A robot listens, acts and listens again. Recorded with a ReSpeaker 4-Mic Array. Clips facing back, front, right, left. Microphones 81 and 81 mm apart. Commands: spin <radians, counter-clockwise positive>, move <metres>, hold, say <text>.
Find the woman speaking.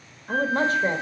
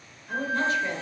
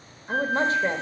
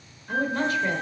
spin -2.44
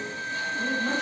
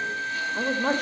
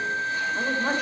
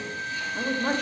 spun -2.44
say Facing the woman speaking.